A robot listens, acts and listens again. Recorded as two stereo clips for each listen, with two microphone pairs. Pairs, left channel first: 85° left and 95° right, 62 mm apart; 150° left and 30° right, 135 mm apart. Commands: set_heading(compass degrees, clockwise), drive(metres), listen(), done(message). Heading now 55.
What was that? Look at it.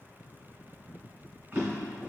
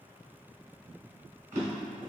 set_heading(95)
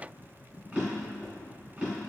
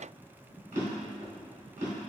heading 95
set_heading(125)
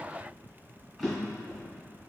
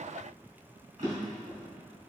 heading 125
set_heading(135)
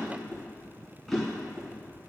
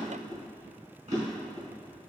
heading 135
done("Facing the drawer, 1 to 2 m away.")